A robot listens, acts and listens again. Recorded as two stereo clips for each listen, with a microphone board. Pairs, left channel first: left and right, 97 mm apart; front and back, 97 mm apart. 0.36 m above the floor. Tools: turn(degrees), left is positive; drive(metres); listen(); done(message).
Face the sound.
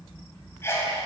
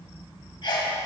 turn(degrees=30)
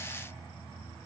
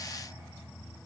done("Facing where the sneeze came from. I can't hear it now.")